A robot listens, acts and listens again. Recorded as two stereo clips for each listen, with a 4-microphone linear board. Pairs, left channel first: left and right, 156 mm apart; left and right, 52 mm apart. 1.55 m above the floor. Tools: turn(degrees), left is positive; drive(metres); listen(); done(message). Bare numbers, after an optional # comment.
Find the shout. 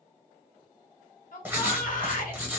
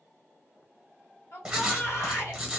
# The shout: about 60° left or 120° left.
turn(60)
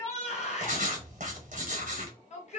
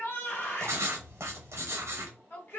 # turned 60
# So it is at 55° left.
turn(55)
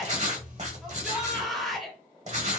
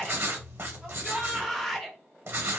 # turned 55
done("Found it: a shout, straight ahead, 1 to 2 m away.")